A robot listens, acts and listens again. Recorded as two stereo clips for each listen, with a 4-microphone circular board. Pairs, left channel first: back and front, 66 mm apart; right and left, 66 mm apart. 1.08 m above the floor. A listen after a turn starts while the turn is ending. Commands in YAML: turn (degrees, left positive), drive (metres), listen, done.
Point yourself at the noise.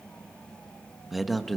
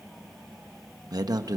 turn: 90
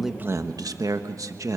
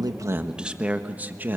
turn: 30
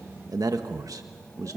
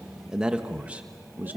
turn: 30
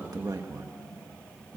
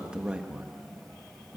turn: 25
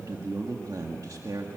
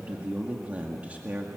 turn: 20
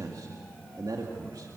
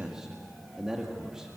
done: "Facing the man speaking, 2 to 4 m away."